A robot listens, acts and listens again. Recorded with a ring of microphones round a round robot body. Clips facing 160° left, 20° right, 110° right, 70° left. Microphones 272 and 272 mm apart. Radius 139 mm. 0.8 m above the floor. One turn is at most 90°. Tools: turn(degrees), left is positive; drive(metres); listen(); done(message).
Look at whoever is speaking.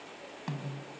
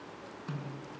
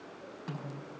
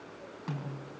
listen()
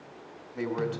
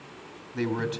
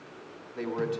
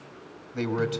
turn(degrees=35)
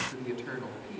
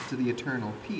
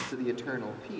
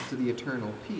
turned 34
done("Facing the man speaking.")